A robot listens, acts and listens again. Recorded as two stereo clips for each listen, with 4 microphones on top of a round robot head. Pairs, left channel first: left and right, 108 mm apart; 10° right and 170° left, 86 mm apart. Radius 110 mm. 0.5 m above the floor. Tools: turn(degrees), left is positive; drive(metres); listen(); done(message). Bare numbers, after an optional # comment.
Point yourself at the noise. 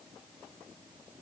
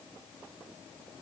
listen()
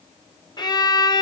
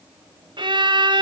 # The violin: 140° left.
turn(140)
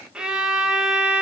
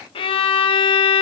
done("Facing the violin.")